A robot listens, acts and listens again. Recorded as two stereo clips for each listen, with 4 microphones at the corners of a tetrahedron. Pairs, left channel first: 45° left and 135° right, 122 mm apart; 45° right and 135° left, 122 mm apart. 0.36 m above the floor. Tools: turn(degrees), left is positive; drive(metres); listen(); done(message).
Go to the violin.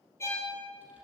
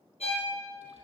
turn(degrees=-20)
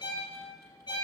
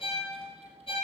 drive(metres=1.0)
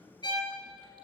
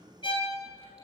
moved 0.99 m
drive(metres=1.0)
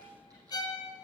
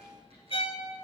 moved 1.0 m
turn(degrees=-10)
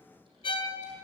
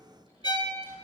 drive(metres=1.0)
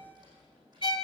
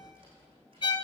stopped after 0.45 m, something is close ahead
done("Arrived at the violin, straight ahead.")